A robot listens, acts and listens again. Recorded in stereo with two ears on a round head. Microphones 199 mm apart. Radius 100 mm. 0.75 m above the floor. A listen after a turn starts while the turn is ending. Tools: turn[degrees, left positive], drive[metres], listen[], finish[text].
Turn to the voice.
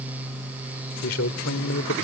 Thought: The man speaking: about 65° left or 115° left.
Action: turn[65]
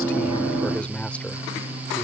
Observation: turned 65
Action: finish[Facing the man speaking.]